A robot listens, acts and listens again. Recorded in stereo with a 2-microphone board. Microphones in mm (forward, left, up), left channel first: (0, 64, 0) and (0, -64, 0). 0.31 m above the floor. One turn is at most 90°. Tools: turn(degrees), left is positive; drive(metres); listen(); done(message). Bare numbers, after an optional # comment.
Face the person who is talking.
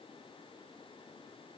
listen()
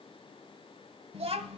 # The child speaking: about 50° right or 130° right.
turn(-50)
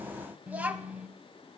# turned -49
# So it is at 15° right.
turn(-15)
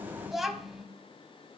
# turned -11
done("Facing the child speaking, 1 to 2 m away.")